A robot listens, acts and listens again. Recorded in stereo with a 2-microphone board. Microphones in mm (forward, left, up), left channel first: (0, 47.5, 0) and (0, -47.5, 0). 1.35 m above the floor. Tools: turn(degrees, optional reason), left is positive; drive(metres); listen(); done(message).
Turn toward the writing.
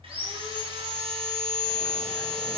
listen()
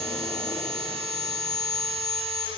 listen()
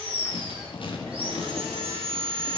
turn(degrees=65, reason="The writing: about 65° left or 115° left.")
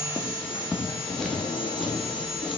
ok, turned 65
done("Found it: writing, straight ahead, 1 to 2 m away.")